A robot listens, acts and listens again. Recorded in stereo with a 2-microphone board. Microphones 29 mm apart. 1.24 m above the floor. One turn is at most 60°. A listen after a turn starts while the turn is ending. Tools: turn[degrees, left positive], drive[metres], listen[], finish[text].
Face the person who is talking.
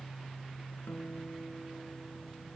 Action: listen[]
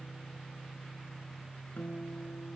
Action: listen[]
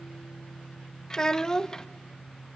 Thought: The child speaking: about 20° left or 160° left.
Action: turn[20]
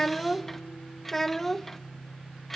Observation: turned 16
Thought: So it is at 10° left.
Action: turn[10]
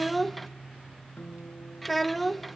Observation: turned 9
Action: finish[Found it: a child speaking, straight ahead.]